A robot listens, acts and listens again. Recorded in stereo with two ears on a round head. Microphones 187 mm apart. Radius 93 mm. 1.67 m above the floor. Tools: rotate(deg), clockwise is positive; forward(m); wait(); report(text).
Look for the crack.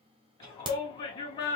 rotate(25)
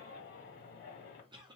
wait()
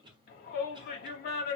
report("I heard a crack, but can't make it out now. It was about straight ahead or 130° right.")